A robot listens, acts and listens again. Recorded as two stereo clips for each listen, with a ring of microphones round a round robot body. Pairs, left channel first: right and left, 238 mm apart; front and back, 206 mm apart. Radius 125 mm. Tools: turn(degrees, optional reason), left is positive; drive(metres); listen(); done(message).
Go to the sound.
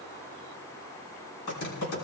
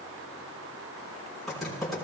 turn(degrees=-90, reason="The typing on a keyboard: 90° right.")
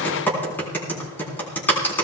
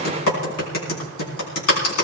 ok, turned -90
turn(degrees=-10, reason="The typing on a keyboard is now 10° right.")
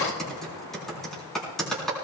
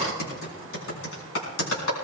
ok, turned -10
drive(metres=1.0)
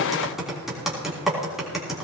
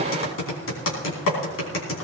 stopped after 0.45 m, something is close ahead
done("Blocked. The typing on a keyboard is further on, straight ahead.")